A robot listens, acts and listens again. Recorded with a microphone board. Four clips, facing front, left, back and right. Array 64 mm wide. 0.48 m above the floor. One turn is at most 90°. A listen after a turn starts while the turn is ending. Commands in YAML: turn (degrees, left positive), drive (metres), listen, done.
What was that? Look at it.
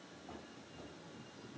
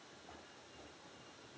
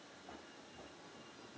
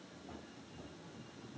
listen: true
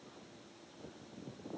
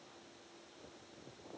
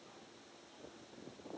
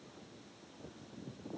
listen: true
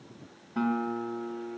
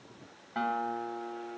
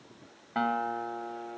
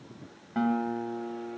turn: 90
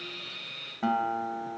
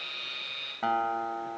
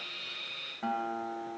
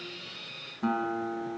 turn: 70
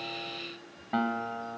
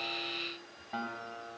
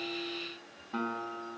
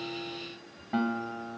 turn: -10
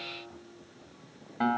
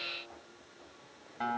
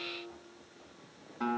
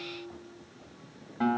done: "Found it: a guitar, straight ahead, 2 to 4 m away."